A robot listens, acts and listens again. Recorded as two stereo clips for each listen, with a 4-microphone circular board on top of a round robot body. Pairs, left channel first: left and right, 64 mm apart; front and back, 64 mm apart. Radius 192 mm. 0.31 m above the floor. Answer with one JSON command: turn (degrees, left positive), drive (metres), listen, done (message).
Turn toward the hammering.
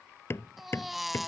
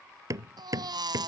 {"turn": 145}
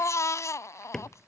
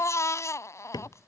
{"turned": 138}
{"turn": 10}
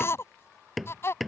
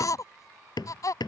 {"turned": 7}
{"done": "Facing the hammering."}